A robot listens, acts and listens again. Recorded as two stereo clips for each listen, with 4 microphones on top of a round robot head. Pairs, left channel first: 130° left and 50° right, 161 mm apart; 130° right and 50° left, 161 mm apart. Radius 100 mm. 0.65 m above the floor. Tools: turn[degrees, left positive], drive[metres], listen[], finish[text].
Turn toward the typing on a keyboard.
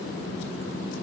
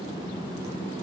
Action: listen[]
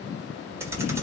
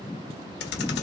Thought: The typing on a keyboard: 125° right.
Action: turn[-125]
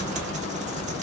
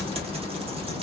Action: finish[Found it: typing on a keyboard, straight ahead, 1 to 2 m away.]